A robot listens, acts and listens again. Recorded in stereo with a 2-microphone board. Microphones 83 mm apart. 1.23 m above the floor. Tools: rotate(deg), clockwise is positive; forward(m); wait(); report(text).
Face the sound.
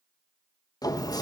rotate(-50)
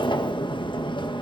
rotate(-80)
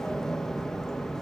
report("Facing the sliding door, 1 to 2 m away.")